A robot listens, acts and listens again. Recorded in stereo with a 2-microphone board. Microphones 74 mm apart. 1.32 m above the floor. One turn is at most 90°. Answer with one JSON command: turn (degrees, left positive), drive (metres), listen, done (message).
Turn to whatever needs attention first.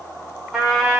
{"listen": true}
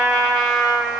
{"listen": true}
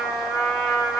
{"done": "I can't make out anything urgent to turn to."}